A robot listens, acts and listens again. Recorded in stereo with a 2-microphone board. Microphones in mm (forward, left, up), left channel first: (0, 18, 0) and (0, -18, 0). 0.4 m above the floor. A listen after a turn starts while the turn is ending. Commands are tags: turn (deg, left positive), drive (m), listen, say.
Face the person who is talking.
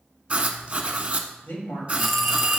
<turn deg="60"/>
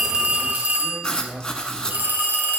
<listen/>
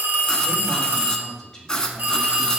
<turn deg="20"/>
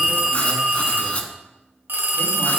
<listen/>
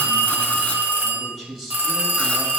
<say>Found it: a man speaking, straight ahead.</say>